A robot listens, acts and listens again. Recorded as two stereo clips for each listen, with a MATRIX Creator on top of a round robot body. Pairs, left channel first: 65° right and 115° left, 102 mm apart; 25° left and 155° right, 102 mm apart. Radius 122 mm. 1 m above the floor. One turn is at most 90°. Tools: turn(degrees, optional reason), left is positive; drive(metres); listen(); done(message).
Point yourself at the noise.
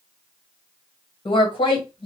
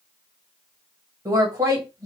turn(degrees=-90, reason="The woman speaking: 100° right.")
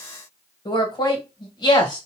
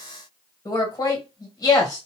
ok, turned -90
turn(degrees=-30, reason="The woman speaking is now 30° right.")
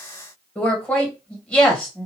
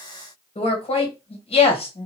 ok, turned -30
turn(degrees=10, reason="The woman speaking is now 10° left.")
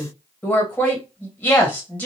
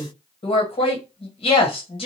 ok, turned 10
done("Facing the woman speaking, 1 to 2 m away.")